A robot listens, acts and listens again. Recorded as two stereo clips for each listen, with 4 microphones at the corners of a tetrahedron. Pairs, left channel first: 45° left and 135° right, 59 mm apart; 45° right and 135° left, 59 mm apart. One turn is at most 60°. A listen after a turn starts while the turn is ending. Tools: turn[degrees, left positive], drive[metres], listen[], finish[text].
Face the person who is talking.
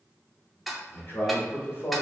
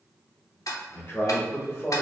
Action: finish[Found it: a man speaking, straight ahead, 1 to 2 m away.]